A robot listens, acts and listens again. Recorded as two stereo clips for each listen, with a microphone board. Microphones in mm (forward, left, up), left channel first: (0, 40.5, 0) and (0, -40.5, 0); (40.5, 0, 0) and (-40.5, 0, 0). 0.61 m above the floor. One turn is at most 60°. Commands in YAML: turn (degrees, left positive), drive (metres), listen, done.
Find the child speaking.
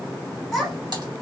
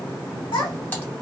done: "Facing the child speaking, 1 to 2 m away."